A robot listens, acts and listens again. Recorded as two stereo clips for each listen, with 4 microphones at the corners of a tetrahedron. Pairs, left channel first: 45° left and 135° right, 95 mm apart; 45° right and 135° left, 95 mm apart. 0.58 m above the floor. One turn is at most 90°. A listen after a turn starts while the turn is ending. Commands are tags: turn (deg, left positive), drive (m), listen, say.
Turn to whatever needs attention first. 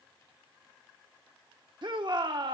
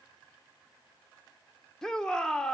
<turn deg="-90"/>
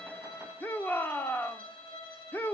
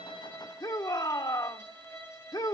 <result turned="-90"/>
<turn deg="-20"/>
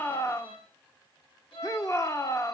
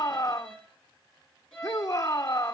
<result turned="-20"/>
<say>Facing the shout, 1 to 2 m away.</say>